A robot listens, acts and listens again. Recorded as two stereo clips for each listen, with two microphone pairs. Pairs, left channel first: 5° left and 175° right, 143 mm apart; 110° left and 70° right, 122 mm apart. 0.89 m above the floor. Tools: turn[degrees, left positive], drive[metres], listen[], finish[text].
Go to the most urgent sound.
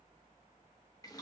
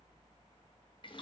Action: listen[]
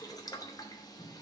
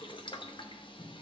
Action: listen[]
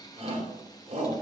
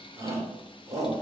Thought: The shout: 130° right.
Action: turn[-130]
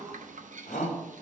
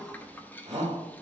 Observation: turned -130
Thought: The shout is now 20° right.
Action: turn[-20]
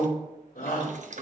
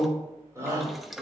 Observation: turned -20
Action: drive[1.0]
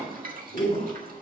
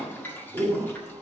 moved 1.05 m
Action: drive[1.0]
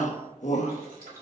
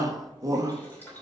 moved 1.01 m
Thought: The shout is now 10° right.
Action: turn[-10]
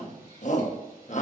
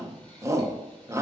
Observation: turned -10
Action: drive[1.0]
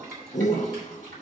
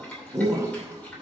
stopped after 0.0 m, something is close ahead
Action: finish[I am next to the shout.]